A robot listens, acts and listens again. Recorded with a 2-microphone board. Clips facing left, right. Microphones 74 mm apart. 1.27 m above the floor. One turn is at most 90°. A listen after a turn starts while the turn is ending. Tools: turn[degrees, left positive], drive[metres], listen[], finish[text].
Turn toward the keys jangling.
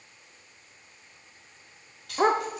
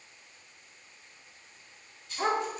Thought: The keys jangling: about 70° left or 110° left.
Action: turn[70]
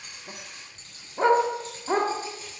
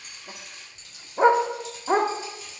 Thought: So it is at 45° left.
Action: turn[45]
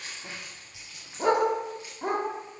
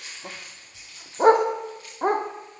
Thought: The keys jangling is now 15° left.
Action: turn[15]
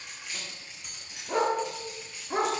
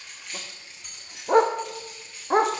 Action: finish[Found it: keys jangling, straight ahead, over 4 m away.]